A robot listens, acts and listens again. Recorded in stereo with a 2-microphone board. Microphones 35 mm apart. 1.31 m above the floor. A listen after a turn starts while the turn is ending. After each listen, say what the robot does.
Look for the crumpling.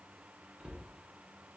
Keep listening.
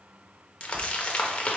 Turn 35° left.
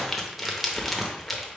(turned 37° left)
Found it: crumpling, straight ahead.